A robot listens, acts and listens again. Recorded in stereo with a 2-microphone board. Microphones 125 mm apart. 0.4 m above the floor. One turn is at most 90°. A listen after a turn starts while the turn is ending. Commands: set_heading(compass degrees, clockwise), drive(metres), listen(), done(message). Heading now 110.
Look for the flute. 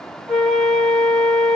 set_heading(80)
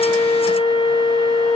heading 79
set_heading(349)
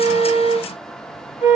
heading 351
set_heading(296)
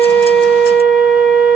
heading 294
done("Found it: a flute, straight ahead.")